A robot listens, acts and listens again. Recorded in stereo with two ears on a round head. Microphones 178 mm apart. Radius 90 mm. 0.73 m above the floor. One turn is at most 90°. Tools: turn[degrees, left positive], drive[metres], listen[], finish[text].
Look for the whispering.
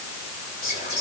Thought: The whispering: about 35° left or 145° left.
Action: turn[35]
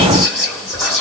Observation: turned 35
Action: finish[Found it: whispering, straight ahead, 2 to 4 m away.]